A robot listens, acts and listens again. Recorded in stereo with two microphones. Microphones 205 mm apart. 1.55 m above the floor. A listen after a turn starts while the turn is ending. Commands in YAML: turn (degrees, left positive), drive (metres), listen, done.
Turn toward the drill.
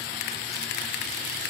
listen: true
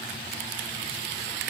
listen: true
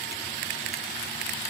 done: "I can't make out a drill."